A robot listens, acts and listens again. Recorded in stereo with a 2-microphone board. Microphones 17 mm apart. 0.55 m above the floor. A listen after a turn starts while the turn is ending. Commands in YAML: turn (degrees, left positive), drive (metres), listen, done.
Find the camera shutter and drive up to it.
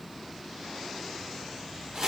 listen: true
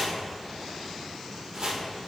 listen: true
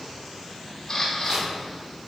turn: 25
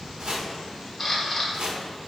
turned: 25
drive: 1.0
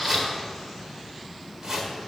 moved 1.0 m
drive: 1.0
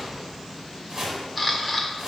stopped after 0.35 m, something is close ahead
done: "I am next to the camera shutter."